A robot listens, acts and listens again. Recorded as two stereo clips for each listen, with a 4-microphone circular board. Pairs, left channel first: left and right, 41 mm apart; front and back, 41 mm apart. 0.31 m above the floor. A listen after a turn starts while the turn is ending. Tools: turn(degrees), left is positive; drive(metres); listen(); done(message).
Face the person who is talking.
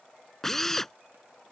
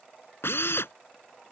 listen()
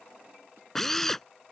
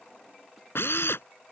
listen()
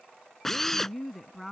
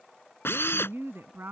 turn(degrees=180)
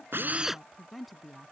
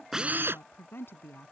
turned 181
done("Found it: a woman speaking, straight ahead.")